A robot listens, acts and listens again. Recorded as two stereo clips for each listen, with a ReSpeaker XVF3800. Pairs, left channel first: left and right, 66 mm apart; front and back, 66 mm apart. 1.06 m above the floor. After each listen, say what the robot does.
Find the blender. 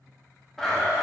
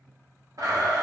Turn 175° left.
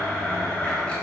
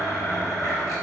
Turn 20° left.
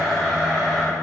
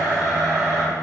Facing the blender.